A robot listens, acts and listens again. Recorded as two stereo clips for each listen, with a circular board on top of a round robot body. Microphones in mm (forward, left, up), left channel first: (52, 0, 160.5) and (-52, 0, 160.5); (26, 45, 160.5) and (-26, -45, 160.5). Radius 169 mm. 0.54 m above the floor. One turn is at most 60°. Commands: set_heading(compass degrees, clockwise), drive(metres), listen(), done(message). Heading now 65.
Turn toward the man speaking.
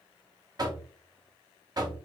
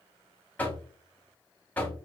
listen()
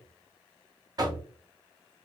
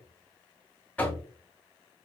listen()
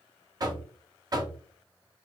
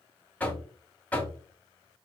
done("I can't make out a man speaking to turn to.")